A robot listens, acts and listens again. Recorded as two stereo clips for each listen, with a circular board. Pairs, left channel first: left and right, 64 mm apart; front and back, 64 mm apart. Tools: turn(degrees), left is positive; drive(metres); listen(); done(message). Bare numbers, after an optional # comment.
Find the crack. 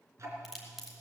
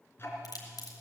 done("Found it: a crack, straight ahead.")